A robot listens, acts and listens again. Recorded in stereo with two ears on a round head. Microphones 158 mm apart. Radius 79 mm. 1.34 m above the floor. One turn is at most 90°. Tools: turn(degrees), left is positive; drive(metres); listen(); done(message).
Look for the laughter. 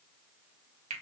listen()
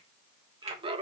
turn(degrees=-30)
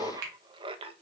turn(degrees=-30)
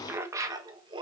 turn(degrees=-30)
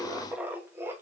turn(degrees=-15)
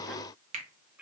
listen()
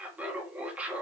turn(degrees=-10)
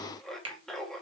done("Found it: laughter, straight ahead.")